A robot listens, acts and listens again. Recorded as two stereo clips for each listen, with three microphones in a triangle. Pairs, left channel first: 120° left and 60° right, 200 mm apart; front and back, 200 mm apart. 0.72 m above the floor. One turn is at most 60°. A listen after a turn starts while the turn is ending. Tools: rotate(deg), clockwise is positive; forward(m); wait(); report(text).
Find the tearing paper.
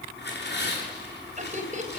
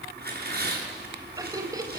rotate(-60)
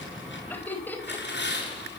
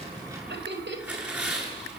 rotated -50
rotate(-60)
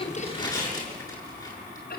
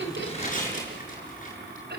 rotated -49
rotate(-50)
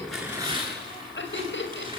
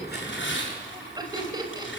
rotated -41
rotate(-10)
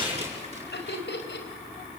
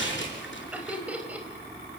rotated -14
report("Facing the tearing paper.")